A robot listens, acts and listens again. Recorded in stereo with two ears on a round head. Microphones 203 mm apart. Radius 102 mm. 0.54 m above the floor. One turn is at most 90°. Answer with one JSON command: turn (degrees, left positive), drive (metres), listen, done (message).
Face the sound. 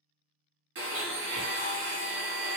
{"turn": -55}
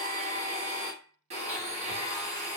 {"turn": -35}
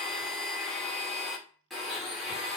{"done": "Found it: a blender, straight ahead, under 1 m away."}